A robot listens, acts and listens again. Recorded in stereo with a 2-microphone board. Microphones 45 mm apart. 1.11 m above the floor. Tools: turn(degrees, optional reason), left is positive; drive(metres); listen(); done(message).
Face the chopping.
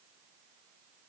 listen()
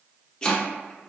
turn(degrees=25, reason="The chopping: about 25° left or 155° left.")
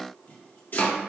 turn(degrees=130, reason="So it is at 130° left.")
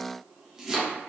turn(degrees=-15, reason="The chopping is now 15° right.")
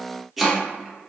done("Facing the chopping, under 1 m away.")